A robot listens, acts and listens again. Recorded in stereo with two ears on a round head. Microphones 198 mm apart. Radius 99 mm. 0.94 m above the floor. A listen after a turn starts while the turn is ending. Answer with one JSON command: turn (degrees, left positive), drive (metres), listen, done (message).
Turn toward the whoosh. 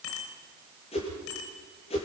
{"turn": 30}
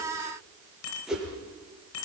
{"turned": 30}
{"done": "Facing the whoosh, over 4 m away."}